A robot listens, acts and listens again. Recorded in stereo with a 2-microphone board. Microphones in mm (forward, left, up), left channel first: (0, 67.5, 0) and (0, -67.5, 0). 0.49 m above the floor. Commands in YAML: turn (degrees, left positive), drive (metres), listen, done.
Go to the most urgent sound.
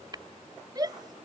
turn: -30
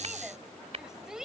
drive: 1.0
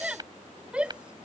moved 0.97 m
turn: -10
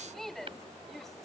drive: 1.0
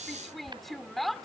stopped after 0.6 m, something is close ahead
done: "I am next to the shout."